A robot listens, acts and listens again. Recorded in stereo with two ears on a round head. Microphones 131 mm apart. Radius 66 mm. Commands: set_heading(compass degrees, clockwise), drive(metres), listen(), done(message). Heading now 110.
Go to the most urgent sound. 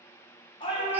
set_heading(75)
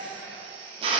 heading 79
drive(1.0)
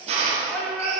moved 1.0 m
drive(1.0)
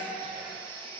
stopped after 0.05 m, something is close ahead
set_heading(89)
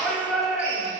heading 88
done("Arrived at the shout, straight ahead.")